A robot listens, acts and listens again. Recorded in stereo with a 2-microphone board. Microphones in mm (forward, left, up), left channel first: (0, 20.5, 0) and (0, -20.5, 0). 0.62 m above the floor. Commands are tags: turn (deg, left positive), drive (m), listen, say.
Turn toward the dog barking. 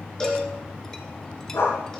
<turn deg="90"/>
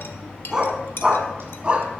<turn deg="-30"/>
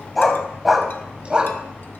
<turn deg="-25"/>
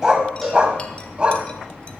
<turn deg="-25"/>
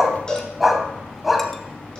<say>Found it: a dog barking, straight ahead.</say>